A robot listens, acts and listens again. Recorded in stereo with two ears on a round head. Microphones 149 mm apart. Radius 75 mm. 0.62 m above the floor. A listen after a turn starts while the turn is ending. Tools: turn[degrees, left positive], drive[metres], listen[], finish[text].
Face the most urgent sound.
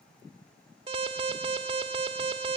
Thought: The alarm: about 30° right or 150° right.
Action: turn[-30]
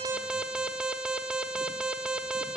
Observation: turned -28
Action: finish[Found it: an alarm, straight ahead, 1 to 2 m away.]